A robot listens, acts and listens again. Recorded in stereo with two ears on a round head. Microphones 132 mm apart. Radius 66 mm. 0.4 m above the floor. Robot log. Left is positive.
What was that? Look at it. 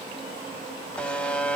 cmd yaw +30
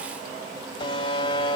note: So it is at 140° left.
cmd yaw +140
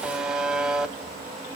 end: Found it: a buzzer, straight ahead.